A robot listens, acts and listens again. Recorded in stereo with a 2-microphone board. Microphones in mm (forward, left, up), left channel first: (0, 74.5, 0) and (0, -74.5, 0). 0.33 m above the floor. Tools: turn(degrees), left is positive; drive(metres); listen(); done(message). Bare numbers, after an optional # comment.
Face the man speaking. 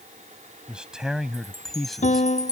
turn(30)
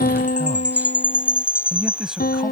turn(-30)
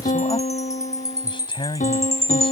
# So it is at 35° left.
turn(35)
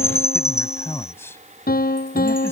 # The man speaking is now 15° left.
turn(15)
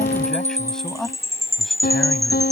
done("Found it: a man speaking, straight ahead.")